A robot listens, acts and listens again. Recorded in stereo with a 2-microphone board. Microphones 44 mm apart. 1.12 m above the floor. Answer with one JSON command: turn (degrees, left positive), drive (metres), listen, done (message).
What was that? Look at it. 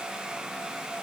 {"listen": true}
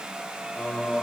{"turn": 25}
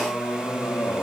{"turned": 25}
{"turn": 115}
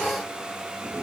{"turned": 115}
{"turn": -60}
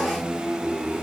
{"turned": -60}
{"turn": -35}
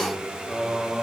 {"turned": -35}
{"turn": -10}
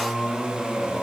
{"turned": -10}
{"done": "Facing the singing."}